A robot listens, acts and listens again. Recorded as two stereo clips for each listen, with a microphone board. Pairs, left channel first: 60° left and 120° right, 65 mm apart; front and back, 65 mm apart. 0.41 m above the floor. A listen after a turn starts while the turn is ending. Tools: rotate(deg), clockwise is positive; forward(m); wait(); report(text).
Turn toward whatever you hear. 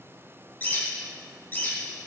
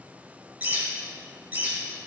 rotate(-120)
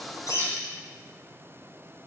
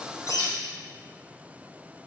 rotate(10)
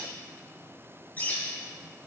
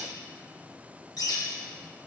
report("Found it: a bird, straight ahead.")